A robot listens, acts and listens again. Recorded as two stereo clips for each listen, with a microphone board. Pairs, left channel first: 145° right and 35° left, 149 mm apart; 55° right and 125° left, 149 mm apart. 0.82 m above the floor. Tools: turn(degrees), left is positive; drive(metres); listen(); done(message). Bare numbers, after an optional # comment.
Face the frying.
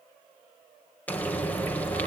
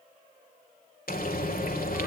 # The frying: 65° right.
turn(-65)
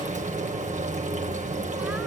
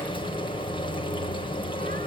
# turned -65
done("Facing the frying.")